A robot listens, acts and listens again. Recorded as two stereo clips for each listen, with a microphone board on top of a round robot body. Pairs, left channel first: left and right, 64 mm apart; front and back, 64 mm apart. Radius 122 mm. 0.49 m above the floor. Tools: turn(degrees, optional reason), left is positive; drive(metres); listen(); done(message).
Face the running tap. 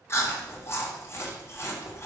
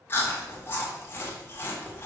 listen()
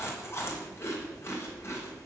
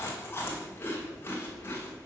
listen()
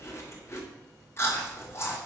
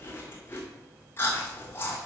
done("I can't make out a running tap to turn to.")